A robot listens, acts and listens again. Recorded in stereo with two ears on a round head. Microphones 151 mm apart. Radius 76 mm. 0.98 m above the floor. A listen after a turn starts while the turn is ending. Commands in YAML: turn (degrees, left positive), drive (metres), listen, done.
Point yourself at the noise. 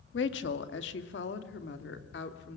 turn: 75
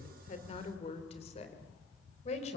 turn: 40
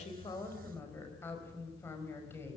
turn: 15
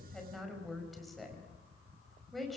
done: "Facing the woman speaking."